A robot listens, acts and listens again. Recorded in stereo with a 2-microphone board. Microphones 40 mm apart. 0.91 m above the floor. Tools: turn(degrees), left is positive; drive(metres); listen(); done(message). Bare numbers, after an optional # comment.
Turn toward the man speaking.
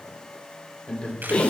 # The man speaking: about 30° left or 150° left.
turn(30)
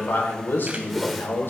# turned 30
# So it is at 115° left.
turn(115)
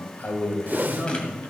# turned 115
# The man speaking is now 55° left.
turn(55)
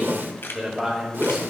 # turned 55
done("Found it: a man speaking, straight ahead.")